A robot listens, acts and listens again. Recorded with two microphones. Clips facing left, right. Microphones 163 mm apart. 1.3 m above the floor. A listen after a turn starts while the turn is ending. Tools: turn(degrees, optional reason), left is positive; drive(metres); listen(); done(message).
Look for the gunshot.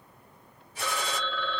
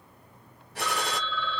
turn(degrees=-65, reason="The gunshot: about 65° right or 115° right.")
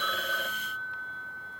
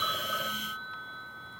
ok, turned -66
listen()
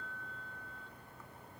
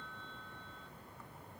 done("I heard a gunshot, but can't make it out now. It was about straight ahead or 50° right.")